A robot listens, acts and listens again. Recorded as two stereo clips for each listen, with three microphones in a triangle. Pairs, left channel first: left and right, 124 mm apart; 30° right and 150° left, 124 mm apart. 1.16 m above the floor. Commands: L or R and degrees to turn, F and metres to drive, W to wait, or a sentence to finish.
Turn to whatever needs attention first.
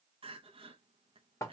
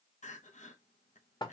R45
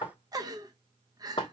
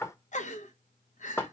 R30
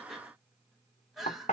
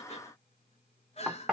Facing the crying.